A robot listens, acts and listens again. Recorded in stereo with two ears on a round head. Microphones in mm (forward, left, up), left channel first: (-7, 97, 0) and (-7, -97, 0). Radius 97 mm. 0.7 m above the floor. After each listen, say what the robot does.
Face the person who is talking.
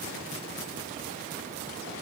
Keep listening.
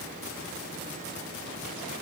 Keep listening.
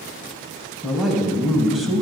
Turn 30° left.
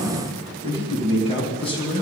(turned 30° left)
Turn 155° left.
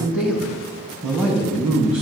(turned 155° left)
Found it: a man speaking, straight ahead, over 4 m away.